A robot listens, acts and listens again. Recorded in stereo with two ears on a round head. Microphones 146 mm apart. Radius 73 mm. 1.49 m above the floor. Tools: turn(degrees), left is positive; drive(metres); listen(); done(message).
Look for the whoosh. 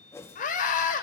turn(degrees=15)
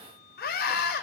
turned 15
listen()
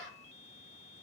listen()
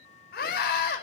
done("I heard a whoosh, but can't make it out now. It was about straight ahead or 150° left.")